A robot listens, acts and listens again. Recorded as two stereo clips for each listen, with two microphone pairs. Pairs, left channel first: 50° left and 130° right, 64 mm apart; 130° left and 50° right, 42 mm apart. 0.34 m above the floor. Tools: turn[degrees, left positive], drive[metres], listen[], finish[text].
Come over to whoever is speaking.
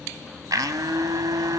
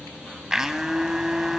Action: listen[]
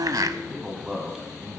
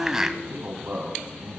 Thought: The man speaking: 55° right.
Action: turn[-55]
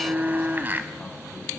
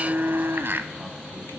Action: listen[]
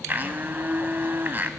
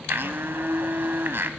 Action: listen[]
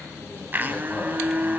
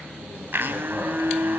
Action: finish[Facing where the man speaking came from. I can't hear it now. I did not reach it.]